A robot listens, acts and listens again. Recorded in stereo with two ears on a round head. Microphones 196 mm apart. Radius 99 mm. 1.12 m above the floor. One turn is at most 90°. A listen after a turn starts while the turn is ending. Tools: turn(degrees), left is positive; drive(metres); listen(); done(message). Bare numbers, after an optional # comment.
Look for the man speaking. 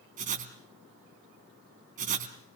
listen()
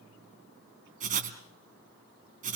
listen()
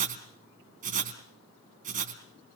done("I can't make out a man speaking to turn to.")